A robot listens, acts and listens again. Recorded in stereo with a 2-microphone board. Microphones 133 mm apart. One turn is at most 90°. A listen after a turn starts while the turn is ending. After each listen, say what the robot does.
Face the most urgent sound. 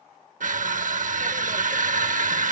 Keep listening.
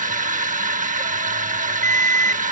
Turn 20° left.
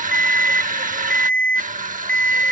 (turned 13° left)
Turn 10° left.
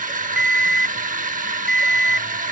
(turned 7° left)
Facing the alarm.